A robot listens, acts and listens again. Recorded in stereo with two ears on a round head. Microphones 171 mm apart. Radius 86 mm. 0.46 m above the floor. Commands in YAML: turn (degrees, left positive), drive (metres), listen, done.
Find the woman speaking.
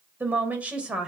turn: -30
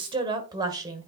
turn: -160
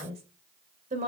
turn: -40
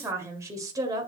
turn: -20
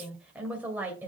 turn: -10
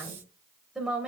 done: "Facing the woman speaking, 2 to 4 m away."